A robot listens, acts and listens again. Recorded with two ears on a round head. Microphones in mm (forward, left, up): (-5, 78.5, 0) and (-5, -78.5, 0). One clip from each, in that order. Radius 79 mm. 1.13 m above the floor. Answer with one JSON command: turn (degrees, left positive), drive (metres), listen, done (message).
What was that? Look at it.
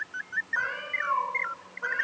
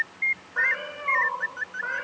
{"turn": 30}
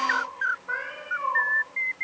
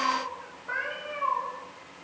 {"turn": 15}
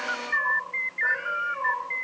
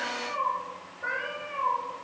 {"turn": 160}
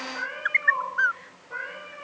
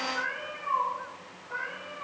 {"turn": 15}
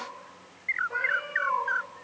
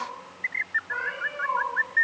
{"done": "Facing the cat meowing, over 4 m away."}